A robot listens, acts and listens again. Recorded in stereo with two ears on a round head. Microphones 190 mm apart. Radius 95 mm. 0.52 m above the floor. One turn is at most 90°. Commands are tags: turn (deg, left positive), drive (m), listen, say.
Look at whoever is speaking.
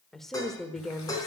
<turn deg="30"/>
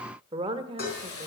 <turn deg="-30"/>
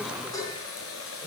<listen/>
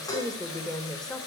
<say>Found it: a woman speaking, straight ahead, 1 to 2 m away.</say>